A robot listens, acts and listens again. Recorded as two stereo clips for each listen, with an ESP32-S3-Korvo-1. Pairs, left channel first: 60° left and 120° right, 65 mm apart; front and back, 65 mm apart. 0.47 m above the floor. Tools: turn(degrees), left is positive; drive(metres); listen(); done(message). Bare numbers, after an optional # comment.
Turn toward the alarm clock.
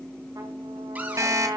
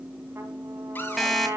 # The alarm clock: 85° right.
turn(-85)
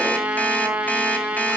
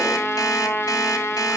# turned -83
listen()
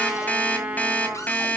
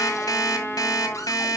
done("Facing the alarm clock, 1 to 2 m away.")